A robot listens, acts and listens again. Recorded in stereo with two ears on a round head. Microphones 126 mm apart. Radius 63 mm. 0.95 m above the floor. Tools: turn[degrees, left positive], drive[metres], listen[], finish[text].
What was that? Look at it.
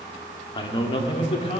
Thought: The man speaking: about 45° left or 135° left.
Action: turn[45]
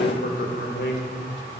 Thought: So it is at 75° left.
Action: turn[75]
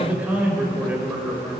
Thought: The man speaking is now 15° right.
Action: turn[-15]
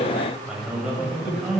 Action: finish[Found it: a man speaking, straight ahead.]